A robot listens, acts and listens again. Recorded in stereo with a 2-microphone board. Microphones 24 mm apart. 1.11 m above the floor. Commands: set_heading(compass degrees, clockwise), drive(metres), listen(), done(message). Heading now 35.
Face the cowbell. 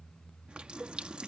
set_heading(125)
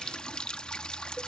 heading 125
listen()
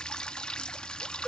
listen()
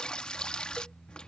done("I heard a cowbell from this way, but can't make it out now.")